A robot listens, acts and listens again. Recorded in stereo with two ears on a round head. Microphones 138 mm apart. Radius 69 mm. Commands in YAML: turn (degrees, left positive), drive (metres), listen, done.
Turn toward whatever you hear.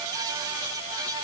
listen: true
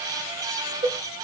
turn: -25
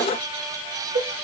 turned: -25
turn: -125
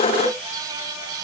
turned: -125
listen: true
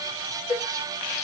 done: "Found it: a cowbell, straight ahead, 2 to 4 m away."